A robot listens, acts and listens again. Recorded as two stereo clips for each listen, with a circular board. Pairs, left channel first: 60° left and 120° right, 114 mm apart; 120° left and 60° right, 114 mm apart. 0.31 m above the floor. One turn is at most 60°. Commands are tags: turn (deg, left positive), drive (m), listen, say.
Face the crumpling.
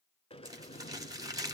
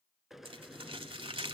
<turn deg="-60"/>
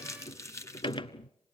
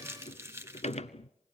<say>Facing the crumpling.</say>